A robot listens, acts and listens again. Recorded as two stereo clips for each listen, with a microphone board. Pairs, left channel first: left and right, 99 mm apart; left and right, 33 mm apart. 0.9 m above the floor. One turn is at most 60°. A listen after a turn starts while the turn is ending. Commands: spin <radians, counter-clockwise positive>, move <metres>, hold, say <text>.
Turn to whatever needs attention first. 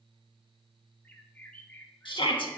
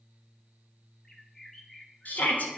spin 0.96
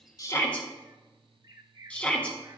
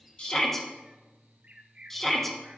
spin 0.26
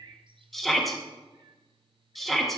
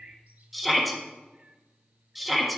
say Found it: a shout, straight ahead, 1 to 2 m away.